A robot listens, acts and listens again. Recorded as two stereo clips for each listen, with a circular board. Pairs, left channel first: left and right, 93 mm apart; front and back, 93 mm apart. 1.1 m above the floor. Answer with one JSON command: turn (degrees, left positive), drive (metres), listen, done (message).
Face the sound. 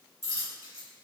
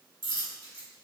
{"turn": -135}
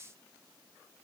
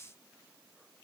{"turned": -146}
{"turn": 10}
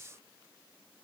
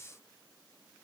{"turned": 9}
{"done": "Facing where the dropped coin came from. I can't hear it now."}